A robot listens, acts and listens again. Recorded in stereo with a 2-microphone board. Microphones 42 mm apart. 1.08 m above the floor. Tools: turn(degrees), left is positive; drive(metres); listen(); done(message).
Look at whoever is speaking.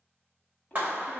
turn(degrees=35)
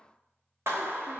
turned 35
listen()
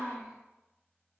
done("Facing the child speaking, 1 to 2 m away.")